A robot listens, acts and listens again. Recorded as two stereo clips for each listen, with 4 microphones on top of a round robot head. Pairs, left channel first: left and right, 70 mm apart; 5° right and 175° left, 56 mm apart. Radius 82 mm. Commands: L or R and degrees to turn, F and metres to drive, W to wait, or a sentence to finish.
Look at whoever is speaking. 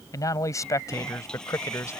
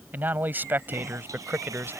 L130
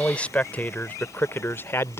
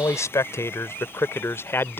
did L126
L40
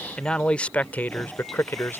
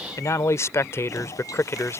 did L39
L30
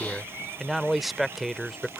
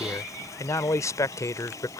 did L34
Found it: a man speaking, straight ahead.